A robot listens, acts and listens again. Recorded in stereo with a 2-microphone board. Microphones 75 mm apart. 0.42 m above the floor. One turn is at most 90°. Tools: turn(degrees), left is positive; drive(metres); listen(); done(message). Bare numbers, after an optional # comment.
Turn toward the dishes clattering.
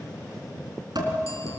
# The dishes clattering: about 65° right or 115° right.
turn(-65)
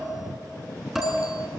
done("Found it: dishes clattering, straight ahead, 2 to 4 m away.")